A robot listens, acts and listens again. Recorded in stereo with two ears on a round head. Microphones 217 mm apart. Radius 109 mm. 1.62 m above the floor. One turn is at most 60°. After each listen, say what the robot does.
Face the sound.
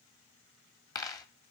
Turn 30° left.
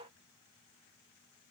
Keep listening.
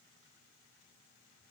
I heard a dropped coin, but can't make it out now. It was about 15° right or 135° left.